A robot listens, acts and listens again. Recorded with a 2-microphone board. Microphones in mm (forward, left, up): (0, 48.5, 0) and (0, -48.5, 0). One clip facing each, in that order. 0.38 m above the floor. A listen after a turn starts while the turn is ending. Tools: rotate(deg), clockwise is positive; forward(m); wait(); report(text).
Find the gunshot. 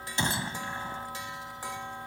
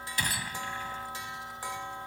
rotate(-25)
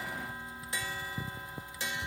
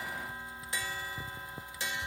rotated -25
wait()
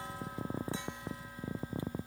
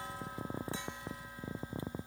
report("I heard a gunshot, but can't make it out now. It was about straight ahead or 130° left.")